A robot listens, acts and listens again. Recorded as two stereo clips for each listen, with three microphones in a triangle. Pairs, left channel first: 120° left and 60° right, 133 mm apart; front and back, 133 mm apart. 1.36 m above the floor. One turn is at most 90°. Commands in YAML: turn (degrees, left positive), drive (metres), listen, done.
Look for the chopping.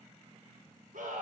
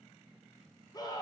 listen: true
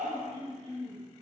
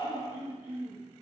listen: true
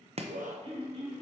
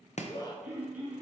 turn: -25
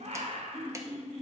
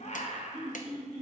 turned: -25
listen: true
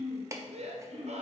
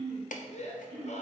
done: "Facing the chopping, under 1 m away."